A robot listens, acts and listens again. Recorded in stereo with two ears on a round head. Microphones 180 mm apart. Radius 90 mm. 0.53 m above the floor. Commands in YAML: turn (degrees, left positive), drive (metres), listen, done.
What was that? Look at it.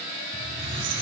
turn: -65
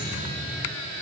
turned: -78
turn: 10
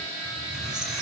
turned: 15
done: "Found it: a squeak, straight ahead, over 4 m away."